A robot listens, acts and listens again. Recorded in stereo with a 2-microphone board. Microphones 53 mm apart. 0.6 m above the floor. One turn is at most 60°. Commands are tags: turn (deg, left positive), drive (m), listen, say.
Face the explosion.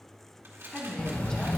<turn deg="35"/>
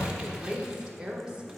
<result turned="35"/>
<turn deg="60"/>
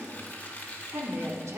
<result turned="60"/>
<turn deg="50"/>
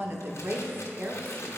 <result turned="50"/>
<say>I heard an explosion from this way, but can't make it out now.</say>